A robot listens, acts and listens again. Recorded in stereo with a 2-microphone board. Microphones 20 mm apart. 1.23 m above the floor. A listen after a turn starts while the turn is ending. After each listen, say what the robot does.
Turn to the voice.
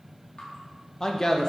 Turn 25° left.
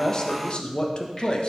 Turn 135° left.
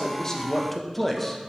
Turn 15° left.
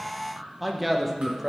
Facing the man speaking.